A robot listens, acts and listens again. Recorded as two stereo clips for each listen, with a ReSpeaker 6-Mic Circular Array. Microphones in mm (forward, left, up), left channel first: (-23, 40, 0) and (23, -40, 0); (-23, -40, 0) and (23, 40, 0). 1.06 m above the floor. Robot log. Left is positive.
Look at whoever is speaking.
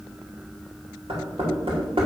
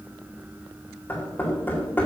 cmd idle
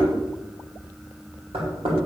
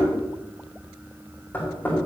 cmd idle
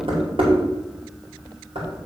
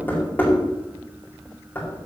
end: I can't make out anyone speaking, only knocking.